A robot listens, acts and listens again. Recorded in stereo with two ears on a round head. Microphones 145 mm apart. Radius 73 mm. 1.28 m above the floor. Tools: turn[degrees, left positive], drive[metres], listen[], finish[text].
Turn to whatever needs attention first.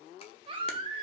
Thought: The baby crying: about 30° right or 150° right.
Action: turn[-30]
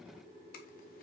Action: listen[]
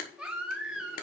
Action: finish[Facing the baby crying, 1 to 2 m away.]